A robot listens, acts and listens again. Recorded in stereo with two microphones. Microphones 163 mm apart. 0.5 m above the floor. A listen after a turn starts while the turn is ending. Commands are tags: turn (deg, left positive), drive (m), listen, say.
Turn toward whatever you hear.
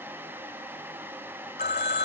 <turn deg="90"/>
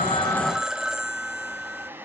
<say>Found it: a phone ringing, straight ahead.</say>